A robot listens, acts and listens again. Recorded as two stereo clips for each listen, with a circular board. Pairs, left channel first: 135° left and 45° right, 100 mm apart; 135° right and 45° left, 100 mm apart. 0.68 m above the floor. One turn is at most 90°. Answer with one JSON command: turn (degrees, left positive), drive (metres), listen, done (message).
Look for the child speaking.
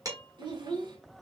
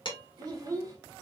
{"done": "Found it: a child speaking, straight ahead, 1 to 2 m away."}